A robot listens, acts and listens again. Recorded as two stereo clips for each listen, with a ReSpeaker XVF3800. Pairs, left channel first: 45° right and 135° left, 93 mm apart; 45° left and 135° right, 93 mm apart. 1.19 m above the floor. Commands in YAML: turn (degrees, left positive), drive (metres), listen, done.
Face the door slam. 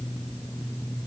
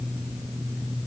listen: true
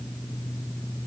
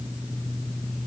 listen: true
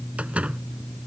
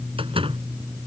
turn: -150
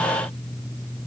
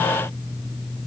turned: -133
turn: -15
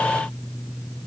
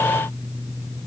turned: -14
done: "Facing where the door slam came from. I can't hear it now."